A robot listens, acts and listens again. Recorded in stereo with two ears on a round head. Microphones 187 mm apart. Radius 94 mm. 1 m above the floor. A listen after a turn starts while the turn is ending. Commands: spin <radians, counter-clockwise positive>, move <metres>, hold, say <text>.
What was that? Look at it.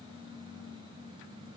hold
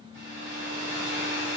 spin -0.52
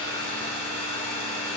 spin 0.26
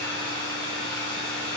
say Facing the hair dryer.